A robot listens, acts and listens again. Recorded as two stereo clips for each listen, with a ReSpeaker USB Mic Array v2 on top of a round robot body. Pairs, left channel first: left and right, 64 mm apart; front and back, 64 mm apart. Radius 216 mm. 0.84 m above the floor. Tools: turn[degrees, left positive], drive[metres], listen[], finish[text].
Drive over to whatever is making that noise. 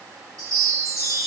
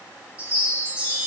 Thought: The chime: 110° right.
Action: turn[-110]
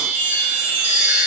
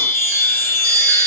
Thought: The chime is now 35° right.
Action: turn[-35]
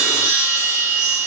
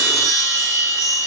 Thought: The chime is now 15° right.
Action: turn[-15]
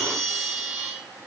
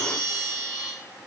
Action: drive[1.0]
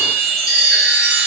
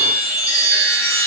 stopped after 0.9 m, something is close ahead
Action: finish[Arrived at the chime, straight ahead.]